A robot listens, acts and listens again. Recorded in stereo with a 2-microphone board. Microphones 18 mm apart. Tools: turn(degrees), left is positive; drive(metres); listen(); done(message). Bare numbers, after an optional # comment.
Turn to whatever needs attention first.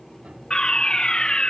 # The fire alarm: about 60° left or 120° left.
turn(60)
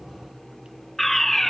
# So it is at 10° left.
turn(10)
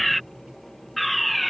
done("Found it: a fire alarm, straight ahead.")